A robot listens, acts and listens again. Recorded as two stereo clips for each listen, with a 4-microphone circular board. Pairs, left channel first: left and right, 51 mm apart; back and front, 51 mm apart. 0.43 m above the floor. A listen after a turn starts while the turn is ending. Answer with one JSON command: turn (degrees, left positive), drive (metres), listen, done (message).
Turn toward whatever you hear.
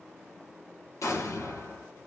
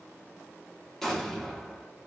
{"turn": 100}
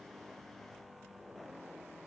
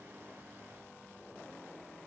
{"done": "Facing where the explosion came from. I can't hear it now."}